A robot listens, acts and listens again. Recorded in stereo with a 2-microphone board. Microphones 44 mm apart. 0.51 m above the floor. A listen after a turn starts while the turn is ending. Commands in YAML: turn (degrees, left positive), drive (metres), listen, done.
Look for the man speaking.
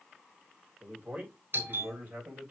turn: -45
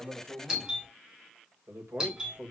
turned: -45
turn: -125
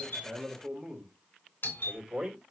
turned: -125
turn: -10
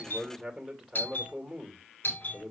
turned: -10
done: "Facing the man speaking."